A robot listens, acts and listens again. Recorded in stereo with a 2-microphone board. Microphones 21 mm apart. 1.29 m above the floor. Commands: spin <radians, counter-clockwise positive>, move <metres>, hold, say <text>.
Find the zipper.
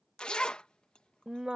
spin 0.96
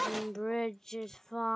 say Facing the zipper.